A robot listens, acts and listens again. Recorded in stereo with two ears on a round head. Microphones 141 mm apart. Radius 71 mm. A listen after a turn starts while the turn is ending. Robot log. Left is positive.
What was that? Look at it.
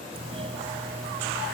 note: The doorbell: about 35° right or 145° right.
cmd yaw -35
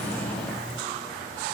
end: Found it: a doorbell, straight ahead.